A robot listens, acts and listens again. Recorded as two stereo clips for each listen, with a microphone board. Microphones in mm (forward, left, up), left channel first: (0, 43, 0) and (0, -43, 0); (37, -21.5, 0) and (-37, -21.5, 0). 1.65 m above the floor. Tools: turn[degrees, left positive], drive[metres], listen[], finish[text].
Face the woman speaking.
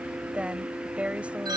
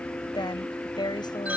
Thought: The woman speaking: 15° right.
Action: turn[-15]
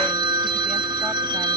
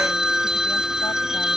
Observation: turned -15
Action: listen[]
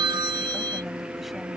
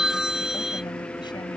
Action: listen[]
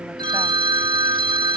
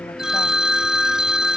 Action: finish[I heard a woman speaking from this way, but can't make it out now.]